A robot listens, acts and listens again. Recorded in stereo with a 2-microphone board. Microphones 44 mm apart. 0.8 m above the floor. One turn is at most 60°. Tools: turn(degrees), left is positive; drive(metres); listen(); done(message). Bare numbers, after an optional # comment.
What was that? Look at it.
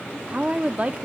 # The woman speaking: about 35° right or 145° right.
turn(-35)
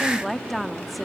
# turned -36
done("Found it: a woman speaking, straight ahead.")